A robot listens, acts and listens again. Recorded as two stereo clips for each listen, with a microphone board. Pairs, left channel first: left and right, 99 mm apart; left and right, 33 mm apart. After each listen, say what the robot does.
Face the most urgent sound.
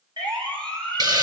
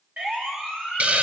Turn 50° right.
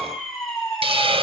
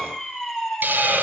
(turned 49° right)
Found it: a siren, straight ahead, over 4 m away.